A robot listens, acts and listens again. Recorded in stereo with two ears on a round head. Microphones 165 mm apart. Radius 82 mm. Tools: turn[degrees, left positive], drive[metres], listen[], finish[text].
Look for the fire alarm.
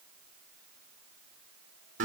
Action: listen[]
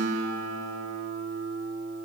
Action: listen[]
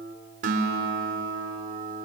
Action: finish[I can't make out a fire alarm, only a guitar.]